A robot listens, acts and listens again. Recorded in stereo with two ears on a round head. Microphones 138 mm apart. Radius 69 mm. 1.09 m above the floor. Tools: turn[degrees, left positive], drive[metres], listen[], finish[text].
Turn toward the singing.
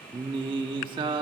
Thought: The singing: about 30° right or 150° right.
Action: turn[-30]
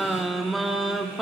Action: finish[Found it: singing, straight ahead, 1 to 2 m away.]